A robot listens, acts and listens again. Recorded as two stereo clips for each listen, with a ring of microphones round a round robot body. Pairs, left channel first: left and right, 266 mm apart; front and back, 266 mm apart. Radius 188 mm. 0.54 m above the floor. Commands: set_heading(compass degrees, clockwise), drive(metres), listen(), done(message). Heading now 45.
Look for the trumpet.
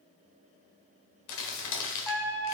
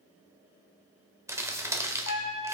done("Found it: a trumpet, straight ahead, 1 to 2 m away.")